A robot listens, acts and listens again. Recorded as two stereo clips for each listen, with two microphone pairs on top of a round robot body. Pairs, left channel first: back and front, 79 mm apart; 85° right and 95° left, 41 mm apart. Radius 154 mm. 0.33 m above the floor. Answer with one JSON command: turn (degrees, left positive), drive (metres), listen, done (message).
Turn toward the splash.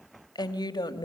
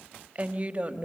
{"listen": true}
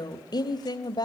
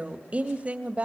{"listen": true}
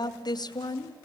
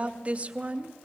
{"done": "I can't make out a splash to turn to."}